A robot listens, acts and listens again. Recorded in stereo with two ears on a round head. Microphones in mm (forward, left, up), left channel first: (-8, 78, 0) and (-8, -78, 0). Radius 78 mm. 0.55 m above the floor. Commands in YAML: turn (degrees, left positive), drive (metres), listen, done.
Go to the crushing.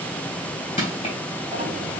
turn: 30
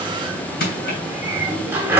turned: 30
turn: 115
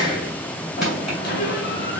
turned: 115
listen: true
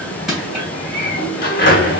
drive: 1.0
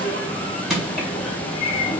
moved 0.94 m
drive: 1.0
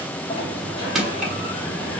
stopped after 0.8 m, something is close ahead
done: "Arrived at the crushing, straight ahead."